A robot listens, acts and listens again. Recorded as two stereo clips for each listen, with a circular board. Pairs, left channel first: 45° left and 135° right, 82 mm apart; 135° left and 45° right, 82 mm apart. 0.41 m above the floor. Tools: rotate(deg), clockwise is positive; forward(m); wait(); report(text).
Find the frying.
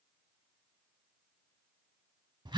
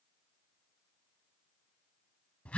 wait()
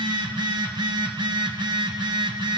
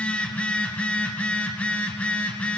wait()
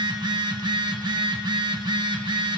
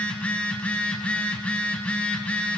report("I can't make out frying, only a phone buzzing.")